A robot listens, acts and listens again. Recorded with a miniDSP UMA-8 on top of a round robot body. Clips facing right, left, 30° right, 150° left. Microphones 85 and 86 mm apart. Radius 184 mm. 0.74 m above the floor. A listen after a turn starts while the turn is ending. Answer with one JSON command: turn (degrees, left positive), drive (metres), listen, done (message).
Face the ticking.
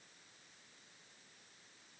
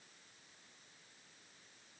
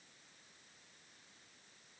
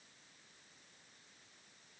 {"listen": true}
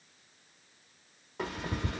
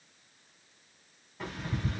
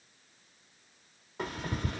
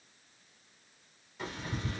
{"turn": -70}
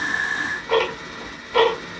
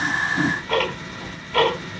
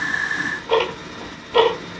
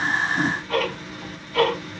{"turn": -10}
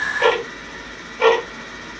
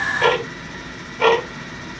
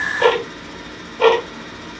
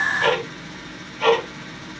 {"done": "Facing the ticking."}